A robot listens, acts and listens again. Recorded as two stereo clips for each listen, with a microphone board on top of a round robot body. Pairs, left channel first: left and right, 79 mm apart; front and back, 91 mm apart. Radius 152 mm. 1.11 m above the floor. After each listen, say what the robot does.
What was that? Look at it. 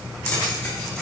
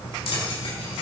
Turn 15° left.
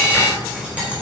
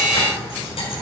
Turn 15° right.
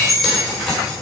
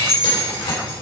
Found it: keys jangling, straight ahead.